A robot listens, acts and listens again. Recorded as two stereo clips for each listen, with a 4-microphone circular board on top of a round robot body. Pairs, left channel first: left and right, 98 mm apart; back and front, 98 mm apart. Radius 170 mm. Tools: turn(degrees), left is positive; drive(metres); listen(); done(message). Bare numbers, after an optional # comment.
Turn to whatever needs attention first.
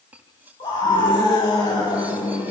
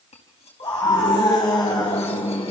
# The scream: 135° left.
turn(135)
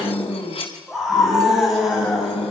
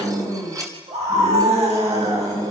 done("Facing the scream, over 4 m away.")